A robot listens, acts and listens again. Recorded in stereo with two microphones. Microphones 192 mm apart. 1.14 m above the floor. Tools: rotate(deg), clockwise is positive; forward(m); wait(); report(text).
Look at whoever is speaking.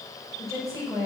rotate(15)
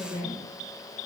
rotate(150)
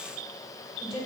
rotate(-30)
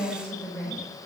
rotate(-10)
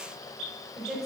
report("Found it: a woman speaking, straight ahead.")